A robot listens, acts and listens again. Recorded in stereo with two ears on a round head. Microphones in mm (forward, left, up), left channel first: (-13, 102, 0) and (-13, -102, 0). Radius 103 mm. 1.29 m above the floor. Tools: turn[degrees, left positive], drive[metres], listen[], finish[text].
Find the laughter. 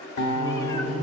Thought: The laughter: about 25° right or 155° right.
Action: turn[-25]
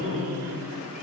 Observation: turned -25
Thought: So it is at 135° right.
Action: turn[-135]
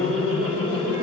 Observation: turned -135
Thought: The laughter is now 55° right.
Action: turn[-55]
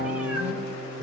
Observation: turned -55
Action: listen[]
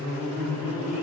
Thought: The laughter is now 10° left.
Action: turn[10]
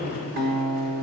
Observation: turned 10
Action: finish[Facing the laughter.]